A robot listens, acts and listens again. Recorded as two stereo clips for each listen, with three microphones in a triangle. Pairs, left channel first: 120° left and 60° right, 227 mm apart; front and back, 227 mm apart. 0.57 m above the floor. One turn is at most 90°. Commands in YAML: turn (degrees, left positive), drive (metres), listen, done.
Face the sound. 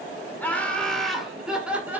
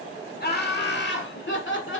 turn: 20
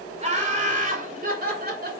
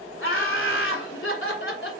turn: -20
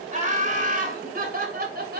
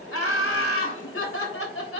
turn: -15
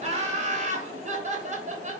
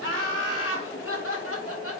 done: "Facing the laughter, 2 to 4 m away."